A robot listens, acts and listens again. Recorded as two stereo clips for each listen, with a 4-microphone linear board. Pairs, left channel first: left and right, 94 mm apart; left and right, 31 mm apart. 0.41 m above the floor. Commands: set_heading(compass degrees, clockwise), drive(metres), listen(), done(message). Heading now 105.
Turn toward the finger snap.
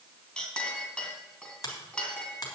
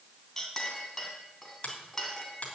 set_heading(60)
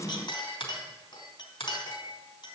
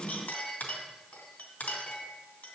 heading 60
set_heading(330)
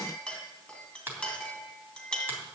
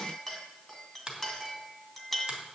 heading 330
set_heading(355)
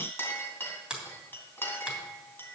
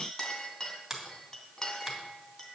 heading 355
set_heading(5)
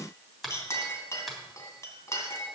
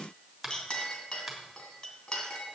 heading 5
done("Facing the finger snap.")